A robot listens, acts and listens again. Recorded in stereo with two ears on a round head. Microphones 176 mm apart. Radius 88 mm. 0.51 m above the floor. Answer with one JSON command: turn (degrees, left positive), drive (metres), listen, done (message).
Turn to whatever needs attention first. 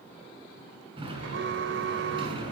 {"turn": -65}
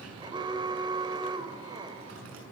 {"turn": -25}
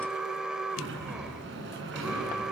{"done": "Facing the alarm, 2 to 4 m away."}